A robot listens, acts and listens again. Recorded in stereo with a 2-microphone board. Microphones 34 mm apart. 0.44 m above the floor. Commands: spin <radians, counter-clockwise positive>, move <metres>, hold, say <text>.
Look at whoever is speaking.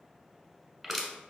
hold
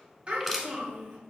spin -0.61
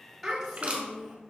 say Found it: a child speaking, straight ahead, 1 to 2 m away.